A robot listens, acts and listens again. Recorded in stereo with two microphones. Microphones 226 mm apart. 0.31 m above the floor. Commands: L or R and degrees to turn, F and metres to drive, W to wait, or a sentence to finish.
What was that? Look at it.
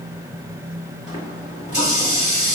L35
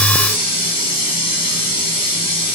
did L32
L110
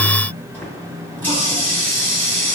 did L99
L10
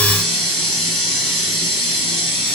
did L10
Facing the running tap, 1 to 2 m away.